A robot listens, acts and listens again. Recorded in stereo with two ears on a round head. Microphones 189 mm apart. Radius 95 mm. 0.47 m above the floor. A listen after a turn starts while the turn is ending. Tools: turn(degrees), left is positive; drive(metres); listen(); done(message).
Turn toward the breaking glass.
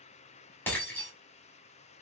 turn(degrees=30)
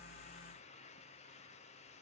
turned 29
listen()
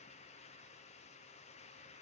done("I heard breaking glass, but can't make it out now. It was about 20° right or 140° left.")